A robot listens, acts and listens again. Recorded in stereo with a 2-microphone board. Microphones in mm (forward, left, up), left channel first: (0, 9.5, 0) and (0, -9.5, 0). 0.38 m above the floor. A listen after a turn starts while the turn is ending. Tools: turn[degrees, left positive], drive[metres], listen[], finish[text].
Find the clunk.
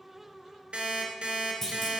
Thought: The clunk: about 20° left or 160° left.
Action: turn[20]
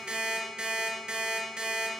Action: listen[]
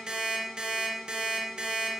Action: finish[I heard a clunk, but can't make it out now. It was about straight ahead or 140° left.]